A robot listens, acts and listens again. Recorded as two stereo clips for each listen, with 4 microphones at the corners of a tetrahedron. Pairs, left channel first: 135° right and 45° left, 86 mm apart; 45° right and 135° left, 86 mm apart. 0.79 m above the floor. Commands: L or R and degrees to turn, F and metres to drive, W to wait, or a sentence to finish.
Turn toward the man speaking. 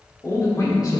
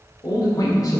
R90
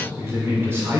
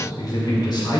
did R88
R20
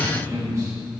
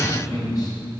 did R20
Facing the man speaking.